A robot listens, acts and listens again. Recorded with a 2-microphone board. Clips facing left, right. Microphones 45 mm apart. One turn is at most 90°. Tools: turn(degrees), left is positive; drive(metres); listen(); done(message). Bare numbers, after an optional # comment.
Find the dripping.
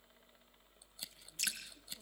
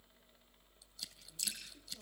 # The dripping: about 50° left or 130° left.
turn(50)
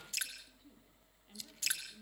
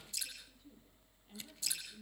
# So it is at 75° left.
turn(75)
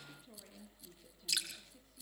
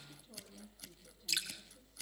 done("Facing the dripping.")